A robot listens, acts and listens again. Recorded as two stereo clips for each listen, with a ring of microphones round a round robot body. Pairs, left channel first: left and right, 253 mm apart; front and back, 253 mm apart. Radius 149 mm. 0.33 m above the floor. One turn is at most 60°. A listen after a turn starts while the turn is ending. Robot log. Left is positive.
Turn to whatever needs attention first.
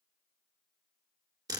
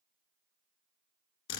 cmd idle
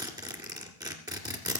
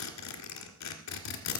cmd idle
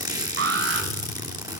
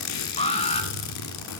note: The alarm: 60° right.
cmd yaw -60
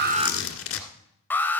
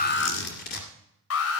note: The alarm is now 10° left.
cmd yaw +10
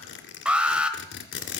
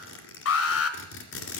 end: Found it: an alarm, straight ahead.